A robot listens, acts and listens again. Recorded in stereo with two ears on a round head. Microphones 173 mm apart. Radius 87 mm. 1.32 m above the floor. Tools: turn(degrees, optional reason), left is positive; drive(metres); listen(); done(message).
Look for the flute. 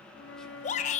turn(degrees=70, reason="The flute: about 70° left or 110° left.")
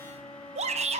turn(degrees=30, reason="So it is at 30° left.")
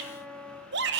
done("Facing the flute, 1 to 2 m away.")